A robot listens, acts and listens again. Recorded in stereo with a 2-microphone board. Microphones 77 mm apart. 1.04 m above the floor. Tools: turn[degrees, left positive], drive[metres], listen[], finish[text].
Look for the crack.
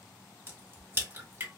Thought: The crack: about 30° right or 150° right.
Action: turn[-30]
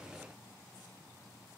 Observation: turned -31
Action: listen[]
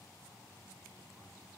Action: finish[I heard a crack, but can't make it out now. It was about straight ahead or 115° right.]